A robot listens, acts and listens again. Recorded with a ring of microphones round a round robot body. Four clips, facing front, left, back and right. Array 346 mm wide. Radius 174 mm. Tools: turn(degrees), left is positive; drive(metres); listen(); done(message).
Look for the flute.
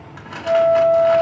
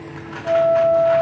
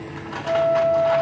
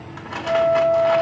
turn(degrees=30)
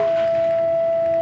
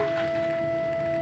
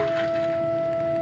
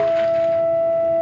turn(degrees=-20)
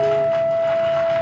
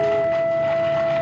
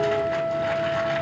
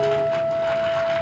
done("Facing the flute.")